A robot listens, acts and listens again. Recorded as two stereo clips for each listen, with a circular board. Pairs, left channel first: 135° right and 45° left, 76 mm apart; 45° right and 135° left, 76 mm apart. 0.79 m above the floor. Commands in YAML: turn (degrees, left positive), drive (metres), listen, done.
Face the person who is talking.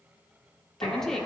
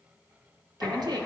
turn: 140
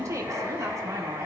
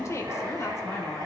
done: "Found it: a woman speaking, straight ahead."